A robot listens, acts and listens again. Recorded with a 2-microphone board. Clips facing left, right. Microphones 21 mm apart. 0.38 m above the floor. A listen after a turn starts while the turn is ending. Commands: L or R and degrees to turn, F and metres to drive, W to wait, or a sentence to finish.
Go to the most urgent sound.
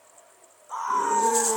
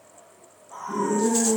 L70
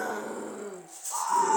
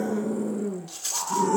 L30
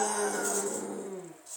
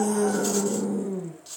F1.0
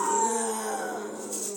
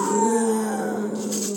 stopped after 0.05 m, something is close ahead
Something is in my way. I am facing the scream but have not reached it.